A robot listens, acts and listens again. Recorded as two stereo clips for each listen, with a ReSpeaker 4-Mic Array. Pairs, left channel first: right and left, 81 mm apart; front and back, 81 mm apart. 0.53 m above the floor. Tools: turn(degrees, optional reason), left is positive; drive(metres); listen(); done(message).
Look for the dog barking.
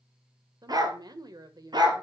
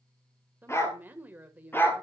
turn(degrees=65, reason="The dog barking: 65° left.")
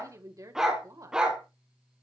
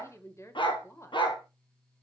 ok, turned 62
turn(degrees=10, reason="The dog barking is now 10° left.")
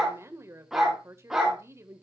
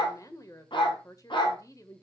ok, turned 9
done("Found it: a dog barking, straight ahead.")